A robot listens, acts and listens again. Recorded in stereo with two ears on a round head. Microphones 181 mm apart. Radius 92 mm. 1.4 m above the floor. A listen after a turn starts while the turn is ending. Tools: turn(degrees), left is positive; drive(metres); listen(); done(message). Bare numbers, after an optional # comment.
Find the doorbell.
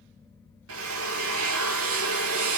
listen()
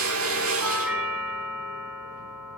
turn(-30)
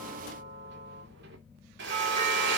# So it is at 145° right.
turn(-145)
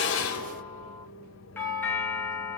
# The doorbell is now 10° left.
turn(10)
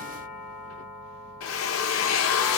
done("Facing the doorbell.")